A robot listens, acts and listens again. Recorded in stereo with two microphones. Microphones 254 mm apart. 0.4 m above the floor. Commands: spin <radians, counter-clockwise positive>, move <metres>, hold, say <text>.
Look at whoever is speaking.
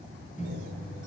hold
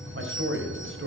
spin -0.96
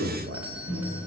spin -1.05
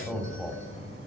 say Found it: a man speaking, straight ahead.